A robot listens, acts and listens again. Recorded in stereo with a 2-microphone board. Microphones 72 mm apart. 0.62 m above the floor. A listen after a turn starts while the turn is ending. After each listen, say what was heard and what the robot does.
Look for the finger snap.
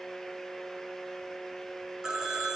Keep listening.
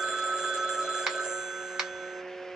Turn 30° right.
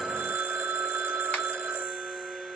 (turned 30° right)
Keep listening.
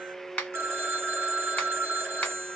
So it is at 20° left. Turn 20° left.
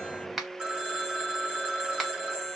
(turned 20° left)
Found it: a finger snap, straight ahead, 1 to 2 m away.